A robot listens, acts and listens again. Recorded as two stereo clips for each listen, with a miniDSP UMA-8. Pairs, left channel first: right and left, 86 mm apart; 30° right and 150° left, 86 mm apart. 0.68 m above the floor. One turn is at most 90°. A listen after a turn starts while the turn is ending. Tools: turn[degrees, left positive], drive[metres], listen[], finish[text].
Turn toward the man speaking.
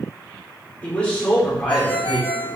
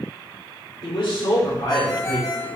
Action: finish[Found it: a man speaking, straight ahead, 1 to 2 m away.]